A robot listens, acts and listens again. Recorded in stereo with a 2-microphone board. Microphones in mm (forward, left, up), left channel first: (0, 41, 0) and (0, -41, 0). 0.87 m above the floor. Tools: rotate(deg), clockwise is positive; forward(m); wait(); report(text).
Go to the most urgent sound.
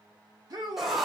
rotate(50)
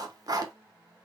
wait()
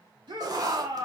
rotate(75)
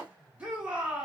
rotate(15)
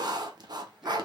wait()
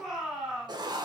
forward(1.0)
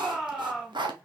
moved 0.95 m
rotate(10)
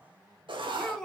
forward(1.0)
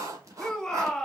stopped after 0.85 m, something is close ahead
report("I am next to the shout.")